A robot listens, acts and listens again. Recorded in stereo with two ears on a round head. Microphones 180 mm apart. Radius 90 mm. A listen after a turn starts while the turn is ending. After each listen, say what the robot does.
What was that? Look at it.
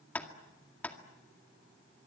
Turn 30° left.
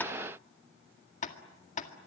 Turn 140° left.
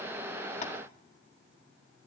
Keep listening.
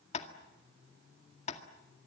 Turn 35° left.
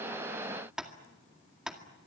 Found it: tapping, straight ahead, 2 to 4 m away.